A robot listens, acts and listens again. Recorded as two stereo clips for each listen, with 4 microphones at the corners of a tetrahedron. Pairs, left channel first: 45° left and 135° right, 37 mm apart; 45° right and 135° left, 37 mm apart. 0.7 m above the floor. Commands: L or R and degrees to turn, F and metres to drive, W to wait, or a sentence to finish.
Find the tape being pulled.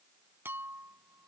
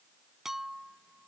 W
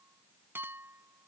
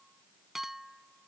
W
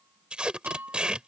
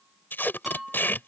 R70
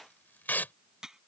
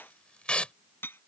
L15
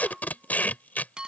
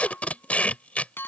Facing the tape being pulled.